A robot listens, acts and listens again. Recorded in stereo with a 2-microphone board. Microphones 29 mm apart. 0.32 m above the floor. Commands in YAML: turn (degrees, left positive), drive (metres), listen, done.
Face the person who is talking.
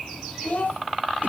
turn: 65
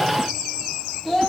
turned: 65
done: "Facing the child speaking."